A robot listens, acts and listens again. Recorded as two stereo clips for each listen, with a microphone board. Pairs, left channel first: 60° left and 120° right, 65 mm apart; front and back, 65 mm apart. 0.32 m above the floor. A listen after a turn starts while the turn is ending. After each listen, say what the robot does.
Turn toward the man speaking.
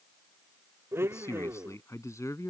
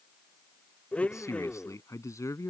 Turn 30° left.
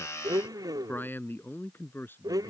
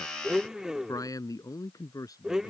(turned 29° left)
Found it: a man speaking, straight ahead.